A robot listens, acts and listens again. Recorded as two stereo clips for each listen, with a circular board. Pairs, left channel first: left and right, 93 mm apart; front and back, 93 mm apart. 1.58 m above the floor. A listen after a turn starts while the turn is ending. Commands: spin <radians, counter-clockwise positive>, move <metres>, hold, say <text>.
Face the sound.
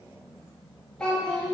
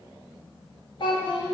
say Facing the child speaking.